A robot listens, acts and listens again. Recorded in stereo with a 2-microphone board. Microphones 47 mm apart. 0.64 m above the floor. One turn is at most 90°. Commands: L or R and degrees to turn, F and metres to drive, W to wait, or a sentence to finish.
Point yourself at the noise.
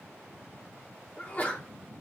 L35
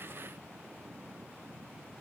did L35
W
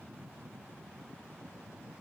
I heard a sneeze, but can't make it out now. It was about straight ahead or 110° left.